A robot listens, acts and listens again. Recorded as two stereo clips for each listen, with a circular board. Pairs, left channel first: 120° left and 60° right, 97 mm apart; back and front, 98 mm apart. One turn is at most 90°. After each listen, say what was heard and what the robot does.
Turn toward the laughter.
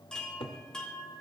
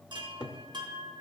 Keep listening.
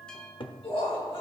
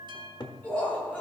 The laughter: 105° left. Turn 90° left.
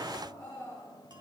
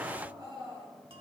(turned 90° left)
The laughter is now 50° left. Turn 50° left.
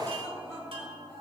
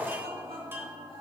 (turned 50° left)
Found it: laughter, straight ahead, over 4 m away.